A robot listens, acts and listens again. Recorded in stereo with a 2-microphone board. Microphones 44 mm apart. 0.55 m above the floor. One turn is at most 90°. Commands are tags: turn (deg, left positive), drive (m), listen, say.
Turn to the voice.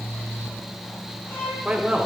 <turn deg="-20"/>
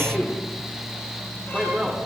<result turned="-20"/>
<say>Found it: a man speaking, straight ahead.</say>